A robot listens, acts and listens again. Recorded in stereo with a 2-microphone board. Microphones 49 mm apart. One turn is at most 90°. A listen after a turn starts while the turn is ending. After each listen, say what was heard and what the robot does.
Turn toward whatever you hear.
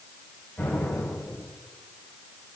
The explosion: about 50° left or 130° left. Turn 50° left.
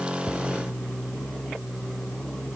Keep listening.
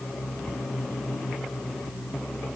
I heard an explosion, but can't make it out now. It was about straight ahead or 80° left.